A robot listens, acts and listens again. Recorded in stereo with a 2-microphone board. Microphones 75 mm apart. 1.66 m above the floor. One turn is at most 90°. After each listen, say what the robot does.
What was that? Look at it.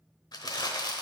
Turn 60° left.
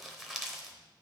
Facing the crumpling, under 1 m away.